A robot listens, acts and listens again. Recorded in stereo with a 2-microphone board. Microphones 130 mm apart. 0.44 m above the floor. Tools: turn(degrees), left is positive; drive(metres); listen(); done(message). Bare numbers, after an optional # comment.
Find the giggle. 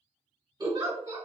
# The giggle: about 30° right or 150° right.
turn(-30)
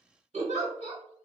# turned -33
# So it is at 115° right.
turn(-115)
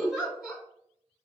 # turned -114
done("Found it: a giggle, straight ahead.")